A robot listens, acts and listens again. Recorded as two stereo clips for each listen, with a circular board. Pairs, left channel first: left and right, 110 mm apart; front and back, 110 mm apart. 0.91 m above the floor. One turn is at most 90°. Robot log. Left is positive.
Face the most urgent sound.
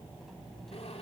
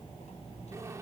cmd idle
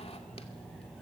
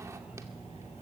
cmd idle
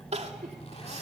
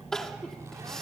note: The crying: 85° right.
cmd yaw -85
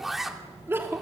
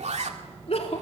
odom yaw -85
note: The crying is now 20° right.
cmd yaw -20
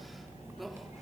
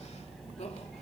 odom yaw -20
cmd idle
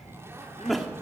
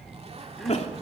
end: Facing the crying.